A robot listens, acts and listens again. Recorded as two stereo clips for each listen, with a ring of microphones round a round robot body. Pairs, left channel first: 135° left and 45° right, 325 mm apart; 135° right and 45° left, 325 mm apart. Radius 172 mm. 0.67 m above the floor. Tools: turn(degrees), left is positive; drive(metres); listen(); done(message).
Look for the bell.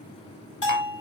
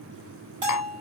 turn(degrees=80)
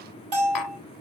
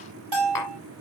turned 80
turn(degrees=25)
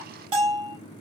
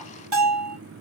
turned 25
done("Found it: a bell, straight ahead.")